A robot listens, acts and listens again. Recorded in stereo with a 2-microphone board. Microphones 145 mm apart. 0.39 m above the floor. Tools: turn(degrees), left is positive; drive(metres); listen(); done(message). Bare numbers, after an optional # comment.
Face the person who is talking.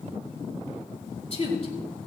# The woman speaking: about 45° left or 135° left.
turn(45)
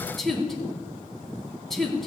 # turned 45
done("Facing the woman speaking.")